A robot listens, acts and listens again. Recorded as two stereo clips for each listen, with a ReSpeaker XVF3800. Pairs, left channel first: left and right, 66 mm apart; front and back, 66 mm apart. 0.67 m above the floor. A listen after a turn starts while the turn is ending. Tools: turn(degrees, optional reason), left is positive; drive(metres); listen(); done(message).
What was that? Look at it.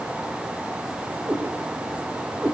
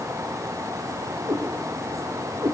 turn(degrees=-155, reason="The cat meowing: 155° right.")
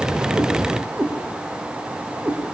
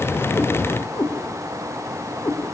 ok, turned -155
turn(degrees=-25, reason="The cat meowing is now 25° right.")
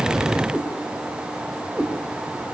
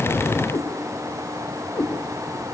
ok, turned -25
done("Facing the cat meowing, over 4 m away.")